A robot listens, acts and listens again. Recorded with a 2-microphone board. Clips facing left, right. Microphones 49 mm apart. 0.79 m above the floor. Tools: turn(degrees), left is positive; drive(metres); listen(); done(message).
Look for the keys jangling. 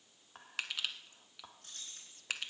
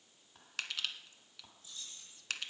turn(degrees=70)
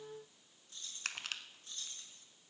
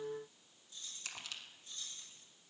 turn(degrees=50)
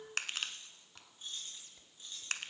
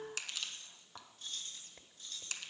turn(degrees=20)
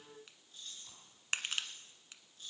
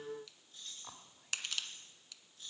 done("Found it: keys jangling, straight ahead.")